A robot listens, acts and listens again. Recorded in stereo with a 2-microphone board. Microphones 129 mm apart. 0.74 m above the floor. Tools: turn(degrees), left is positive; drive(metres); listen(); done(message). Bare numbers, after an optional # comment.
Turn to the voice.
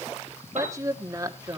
# The woman speaking: about 25° right or 155° right.
turn(-25)
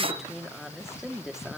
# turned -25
done("Facing the woman speaking, 1 to 2 m away.")